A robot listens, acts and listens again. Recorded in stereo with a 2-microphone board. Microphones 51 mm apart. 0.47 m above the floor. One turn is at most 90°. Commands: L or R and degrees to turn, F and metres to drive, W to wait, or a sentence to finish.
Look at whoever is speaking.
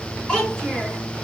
L30
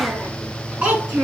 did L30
R25
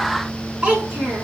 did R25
R20
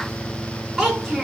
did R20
R10
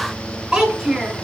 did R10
R10
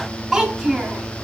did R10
Facing the child speaking.